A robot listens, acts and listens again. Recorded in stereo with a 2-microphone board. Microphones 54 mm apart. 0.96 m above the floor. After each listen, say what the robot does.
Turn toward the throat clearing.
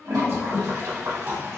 Turn 50° right.
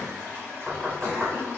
Turn 85° right.
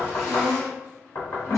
Facing the throat clearing.